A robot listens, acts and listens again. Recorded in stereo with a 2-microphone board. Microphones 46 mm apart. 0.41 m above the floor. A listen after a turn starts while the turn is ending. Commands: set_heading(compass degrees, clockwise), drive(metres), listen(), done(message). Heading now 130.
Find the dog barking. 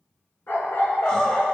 set_heading(70)
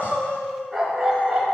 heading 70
done("Facing the dog barking.")